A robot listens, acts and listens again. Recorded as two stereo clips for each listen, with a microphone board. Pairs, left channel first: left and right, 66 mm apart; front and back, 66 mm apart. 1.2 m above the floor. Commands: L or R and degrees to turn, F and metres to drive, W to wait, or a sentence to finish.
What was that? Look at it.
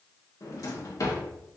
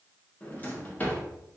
L60
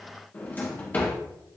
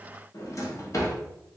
L25
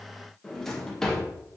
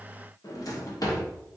Found it: a drawer, straight ahead, under 1 m away.